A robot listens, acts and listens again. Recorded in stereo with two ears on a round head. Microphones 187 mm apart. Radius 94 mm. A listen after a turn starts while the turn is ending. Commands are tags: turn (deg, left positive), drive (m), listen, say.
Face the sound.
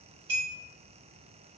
<turn deg="-60"/>
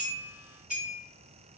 <say>Facing the clink, 1 to 2 m away.</say>